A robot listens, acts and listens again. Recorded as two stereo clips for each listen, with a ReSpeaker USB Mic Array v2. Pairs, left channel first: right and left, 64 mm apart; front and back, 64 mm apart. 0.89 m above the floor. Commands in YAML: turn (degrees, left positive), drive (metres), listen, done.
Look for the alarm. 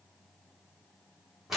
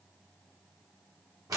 listen: true
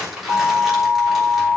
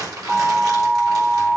turn: -110
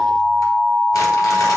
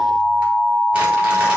turn: -30
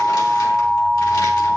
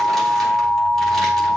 done: "Facing the alarm, 1 to 2 m away."